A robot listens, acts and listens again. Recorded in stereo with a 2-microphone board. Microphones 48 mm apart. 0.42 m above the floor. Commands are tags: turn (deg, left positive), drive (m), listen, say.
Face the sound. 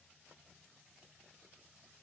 <listen/>
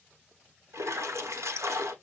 <turn deg="-90"/>
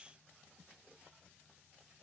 <say>Facing where the splash came from. I can't hear it now.</say>